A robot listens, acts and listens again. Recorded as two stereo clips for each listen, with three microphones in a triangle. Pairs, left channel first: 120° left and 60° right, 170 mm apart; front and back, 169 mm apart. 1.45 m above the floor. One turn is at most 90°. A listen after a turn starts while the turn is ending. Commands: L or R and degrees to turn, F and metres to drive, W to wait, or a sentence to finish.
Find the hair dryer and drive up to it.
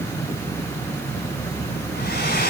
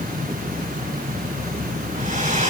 L90
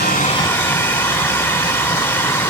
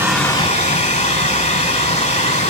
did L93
L45
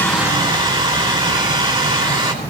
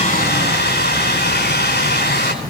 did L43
F1.0
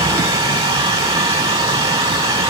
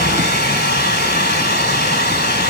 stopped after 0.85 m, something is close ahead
Something is in my way. I am facing the hair dryer but have not reached it.